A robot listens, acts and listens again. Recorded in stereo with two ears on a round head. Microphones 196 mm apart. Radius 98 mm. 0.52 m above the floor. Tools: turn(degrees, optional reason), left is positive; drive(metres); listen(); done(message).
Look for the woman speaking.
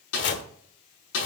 listen()
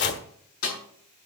listen()
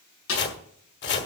done("I can't make out a woman speaking, only a snare drum and chopping.")